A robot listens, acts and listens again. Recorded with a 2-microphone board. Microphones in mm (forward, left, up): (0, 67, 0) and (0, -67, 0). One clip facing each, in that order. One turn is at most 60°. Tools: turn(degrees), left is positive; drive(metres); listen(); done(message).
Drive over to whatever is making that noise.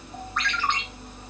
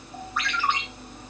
turn(degrees=-30)
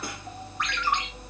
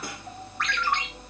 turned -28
turn(degrees=20)
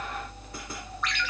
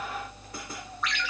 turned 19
drive(metres=1.0)
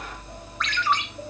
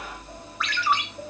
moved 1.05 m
drive(metres=1.0)
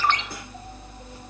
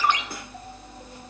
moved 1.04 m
turn(degrees=-25)
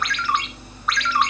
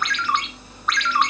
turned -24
drive(metres=1.0)
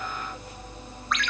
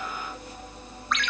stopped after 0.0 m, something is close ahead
done("I am next to the ringtone.")